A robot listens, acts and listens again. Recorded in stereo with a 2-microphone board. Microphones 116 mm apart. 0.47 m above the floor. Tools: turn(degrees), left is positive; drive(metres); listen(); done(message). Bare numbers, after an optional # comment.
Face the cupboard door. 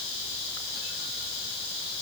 listen()
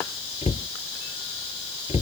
# The cupboard door: about 70° left or 110° left.
turn(70)
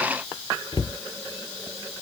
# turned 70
# So it is at 40° left.
turn(40)
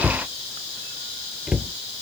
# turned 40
done("Facing the cupboard door.")